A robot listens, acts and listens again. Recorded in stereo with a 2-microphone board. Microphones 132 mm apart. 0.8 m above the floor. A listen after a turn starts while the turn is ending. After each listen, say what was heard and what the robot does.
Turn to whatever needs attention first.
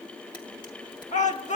The shout: about 65° left or 115° left. Turn 65° left.
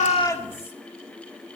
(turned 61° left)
Keep listening.
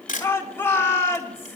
So it is at 20° left. Turn 20° left.
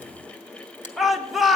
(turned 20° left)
Facing the shout, 1 to 2 m away.